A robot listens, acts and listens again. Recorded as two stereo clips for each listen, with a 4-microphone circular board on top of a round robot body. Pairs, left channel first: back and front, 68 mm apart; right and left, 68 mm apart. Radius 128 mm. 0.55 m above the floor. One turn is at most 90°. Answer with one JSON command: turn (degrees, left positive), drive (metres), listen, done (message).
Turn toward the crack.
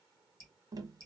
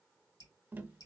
{"listen": true}
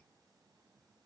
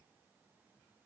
{"listen": true}
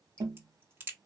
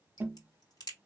{"turn": -60}
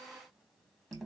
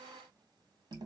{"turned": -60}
{"done": "I heard a crack from this way, but can't make it out now."}